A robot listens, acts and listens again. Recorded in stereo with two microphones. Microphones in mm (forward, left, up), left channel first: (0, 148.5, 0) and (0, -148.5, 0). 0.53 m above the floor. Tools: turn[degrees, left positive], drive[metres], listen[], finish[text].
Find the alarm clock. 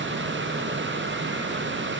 Action: listen[]
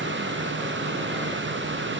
Action: listen[]
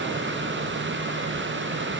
Action: finish[I can't make out an alarm clock.]